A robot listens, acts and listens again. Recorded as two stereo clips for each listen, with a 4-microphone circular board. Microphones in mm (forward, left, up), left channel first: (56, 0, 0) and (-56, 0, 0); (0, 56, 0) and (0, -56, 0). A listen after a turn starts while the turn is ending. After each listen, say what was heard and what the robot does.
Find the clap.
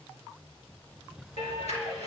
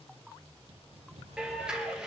Facing the clap, over 4 m away.